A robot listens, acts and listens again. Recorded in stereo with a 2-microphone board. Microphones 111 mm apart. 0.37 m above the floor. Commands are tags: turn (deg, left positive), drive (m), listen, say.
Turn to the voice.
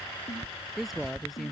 <turn deg="30"/>
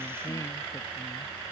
<listen/>
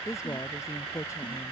<turn deg="150"/>
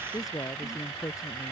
<turn deg="35"/>
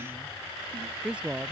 <turn deg="-10"/>
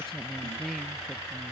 <say>Facing the woman speaking.</say>